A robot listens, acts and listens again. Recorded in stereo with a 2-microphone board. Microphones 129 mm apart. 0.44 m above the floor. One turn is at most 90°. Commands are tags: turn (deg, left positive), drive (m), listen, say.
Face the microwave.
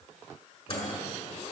<turn deg="45"/>
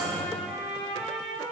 <turn deg="80"/>
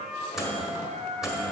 <say>Facing the microwave, 1 to 2 m away.</say>